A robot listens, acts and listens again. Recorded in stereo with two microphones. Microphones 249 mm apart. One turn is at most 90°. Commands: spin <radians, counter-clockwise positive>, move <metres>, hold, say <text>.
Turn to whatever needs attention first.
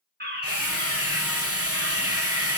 spin -0.70
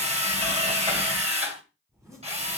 hold
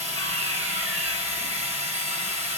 hold
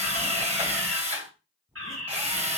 spin -1.57
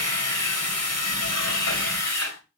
hold
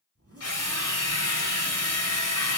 hold
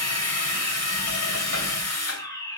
spin 0.26
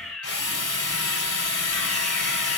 say Facing the fire alarm.